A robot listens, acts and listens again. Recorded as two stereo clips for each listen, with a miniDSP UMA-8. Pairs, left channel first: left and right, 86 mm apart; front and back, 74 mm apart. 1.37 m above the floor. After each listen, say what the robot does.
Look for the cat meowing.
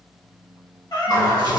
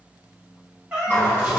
Turn 110° left.
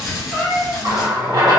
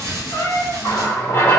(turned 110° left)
Found it: a cat meowing, straight ahead, 1 to 2 m away.